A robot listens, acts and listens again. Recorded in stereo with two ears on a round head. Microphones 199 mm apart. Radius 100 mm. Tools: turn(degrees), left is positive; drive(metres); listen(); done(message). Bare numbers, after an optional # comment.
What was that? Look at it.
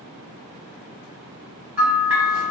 turn(-30)
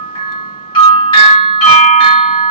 # So it is at 25° left.
turn(25)
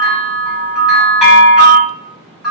done("Found it: a bell, straight ahead.")